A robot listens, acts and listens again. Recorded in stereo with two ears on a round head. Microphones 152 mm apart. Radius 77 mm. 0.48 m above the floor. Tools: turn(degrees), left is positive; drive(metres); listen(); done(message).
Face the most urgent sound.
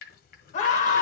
turn(degrees=45)
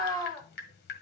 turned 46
turn(degrees=10)
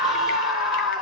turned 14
done("Facing the scream.")